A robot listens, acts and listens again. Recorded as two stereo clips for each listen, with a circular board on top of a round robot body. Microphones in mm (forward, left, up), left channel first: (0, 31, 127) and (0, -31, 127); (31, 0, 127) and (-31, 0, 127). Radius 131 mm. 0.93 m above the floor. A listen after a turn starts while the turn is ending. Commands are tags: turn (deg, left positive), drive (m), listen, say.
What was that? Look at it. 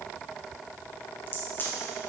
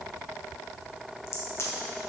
<turn deg="40"/>
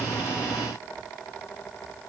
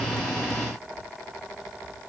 <say>Facing where the crack came from. I can't hear it now.</say>